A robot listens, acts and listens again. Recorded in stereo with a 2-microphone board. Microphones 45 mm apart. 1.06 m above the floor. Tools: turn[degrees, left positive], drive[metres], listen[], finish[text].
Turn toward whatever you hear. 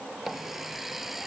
Action: turn[-30]
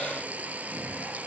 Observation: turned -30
Thought: So it is at 145° right.
Action: turn[-145]
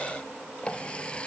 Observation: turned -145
Thought: The running tap is now 25° left.
Action: turn[25]
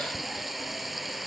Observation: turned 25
Action: finish[Found it: a running tap, straight ahead.]